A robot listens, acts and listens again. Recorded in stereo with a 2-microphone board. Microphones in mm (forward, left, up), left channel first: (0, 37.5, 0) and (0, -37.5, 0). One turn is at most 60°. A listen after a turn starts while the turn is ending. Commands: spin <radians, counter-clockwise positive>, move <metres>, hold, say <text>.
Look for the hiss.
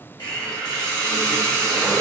spin 1.05
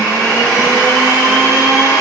spin 0.52
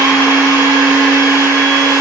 hold
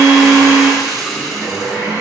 say Found it: a hiss, straight ahead.